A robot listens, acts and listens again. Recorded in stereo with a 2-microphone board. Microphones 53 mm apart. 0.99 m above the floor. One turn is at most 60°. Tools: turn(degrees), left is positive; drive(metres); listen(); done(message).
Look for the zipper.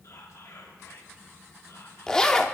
turn(degrees=30)
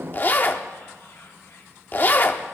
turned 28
turn(degrees=60)
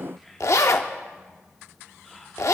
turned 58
turn(degrees=60)
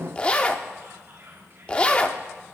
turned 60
turn(degrees=25)
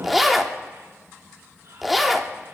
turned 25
done("Found it: a zipper, straight ahead, under 1 m away.")